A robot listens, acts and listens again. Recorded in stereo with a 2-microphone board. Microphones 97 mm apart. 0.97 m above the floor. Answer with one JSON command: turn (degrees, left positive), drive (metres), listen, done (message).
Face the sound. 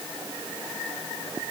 {"listen": true}
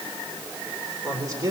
{"turn": -35}
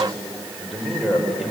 {"done": "Facing the man speaking."}